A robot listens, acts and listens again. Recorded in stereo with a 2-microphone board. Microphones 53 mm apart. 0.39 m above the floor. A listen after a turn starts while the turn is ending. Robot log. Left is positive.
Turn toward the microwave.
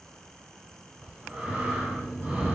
note: The microwave: about 40° left or 140° left.
cmd yaw +40
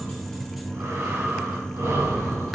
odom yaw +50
end: Facing the microwave, 1 to 2 m away.